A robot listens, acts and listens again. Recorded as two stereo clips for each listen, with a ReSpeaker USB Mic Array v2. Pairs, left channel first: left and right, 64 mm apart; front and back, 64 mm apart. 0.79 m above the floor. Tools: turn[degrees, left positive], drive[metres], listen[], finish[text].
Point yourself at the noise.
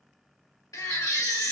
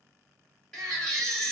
Thought: The baby crying: 80° left.
Action: turn[80]
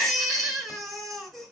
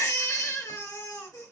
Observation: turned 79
Action: finish[Facing the baby crying, 1 to 2 m away.]